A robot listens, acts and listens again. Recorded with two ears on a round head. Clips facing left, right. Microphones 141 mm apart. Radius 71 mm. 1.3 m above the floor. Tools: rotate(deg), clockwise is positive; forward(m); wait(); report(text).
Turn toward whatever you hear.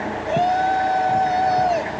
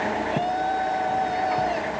rotate(-65)
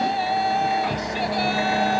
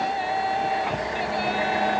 rotate(-50)
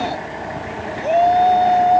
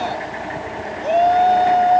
rotate(-10)
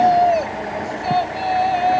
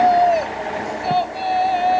report("Facing the shout.")